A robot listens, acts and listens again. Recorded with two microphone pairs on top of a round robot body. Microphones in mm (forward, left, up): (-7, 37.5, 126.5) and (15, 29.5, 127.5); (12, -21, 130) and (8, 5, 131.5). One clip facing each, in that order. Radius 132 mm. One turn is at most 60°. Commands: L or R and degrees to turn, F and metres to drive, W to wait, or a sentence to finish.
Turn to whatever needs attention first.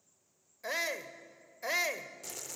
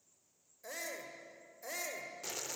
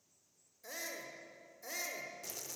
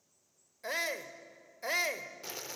L60
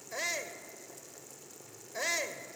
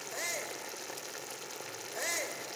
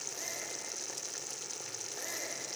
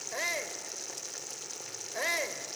L60
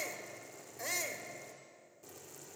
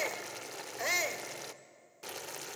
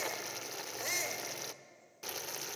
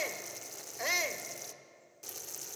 L40
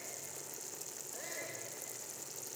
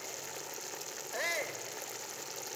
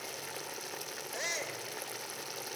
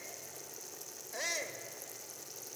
Facing the shout.